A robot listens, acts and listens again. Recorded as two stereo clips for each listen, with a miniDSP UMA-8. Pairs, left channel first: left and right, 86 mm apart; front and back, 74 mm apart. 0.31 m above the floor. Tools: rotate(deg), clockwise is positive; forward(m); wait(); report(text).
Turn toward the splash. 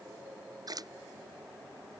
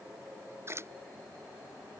rotate(130)
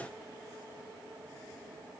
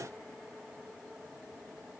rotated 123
report("I heard a splash from this way, but can't make it out now.")